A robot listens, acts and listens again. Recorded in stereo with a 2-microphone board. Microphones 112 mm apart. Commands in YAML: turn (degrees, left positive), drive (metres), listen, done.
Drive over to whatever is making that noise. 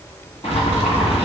turn: 65
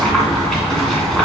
drive: 1.0
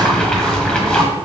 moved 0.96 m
turn: 10
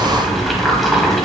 drive: 1.0
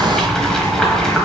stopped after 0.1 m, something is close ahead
done: "Arrived at the boiling, straight ahead."